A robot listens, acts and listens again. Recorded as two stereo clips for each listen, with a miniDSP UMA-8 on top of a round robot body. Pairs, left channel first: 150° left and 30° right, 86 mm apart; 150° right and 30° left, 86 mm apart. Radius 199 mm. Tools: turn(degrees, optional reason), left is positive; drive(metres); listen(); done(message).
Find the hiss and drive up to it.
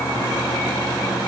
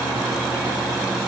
listen()
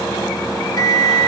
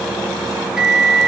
listen()
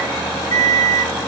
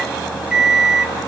done("I can't make out a hiss, only a microwave.")